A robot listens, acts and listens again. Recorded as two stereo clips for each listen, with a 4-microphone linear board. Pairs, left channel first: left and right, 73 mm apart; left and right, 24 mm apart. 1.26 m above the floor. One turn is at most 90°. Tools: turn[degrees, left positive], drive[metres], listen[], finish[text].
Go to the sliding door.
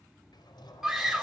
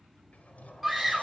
Action: turn[90]
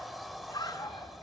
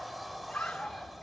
Action: drive[1.0]
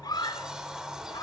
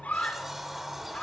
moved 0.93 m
Thought: The sliding door is now 10° right.
Action: turn[-10]
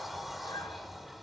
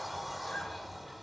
Action: drive[1.0]
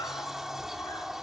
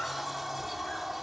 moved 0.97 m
Action: drive[1.0]
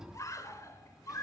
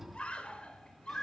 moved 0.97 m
Thought: The sliding door is now 10° right.
Action: turn[-10]
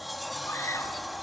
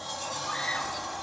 Action: drive[1.0]
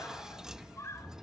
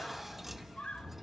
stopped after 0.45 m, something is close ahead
Thought: The sliding door is now 10° right.
Action: turn[-10]
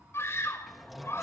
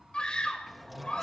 Action: finish[I am next to the sliding door.]